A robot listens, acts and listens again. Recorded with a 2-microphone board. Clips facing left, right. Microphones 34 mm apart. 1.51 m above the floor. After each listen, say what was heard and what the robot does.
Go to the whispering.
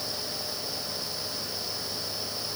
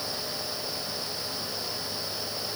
Keep listening.
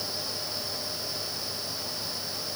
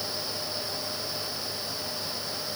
Keep listening.
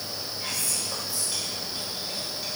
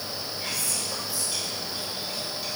Turn 30° left.
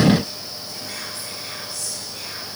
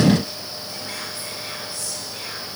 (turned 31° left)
So it is at 30° right. Turn 30° right.
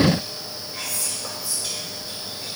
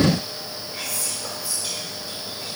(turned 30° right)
Drive 1.0 m forward.
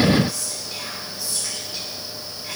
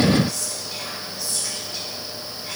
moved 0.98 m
The whispering is now 10° left. Turn 10° left.
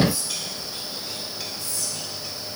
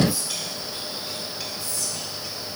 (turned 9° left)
Drive 1.0 m forward.
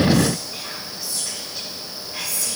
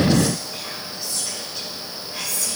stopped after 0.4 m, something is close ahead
Arrived at the whispering, straight ahead.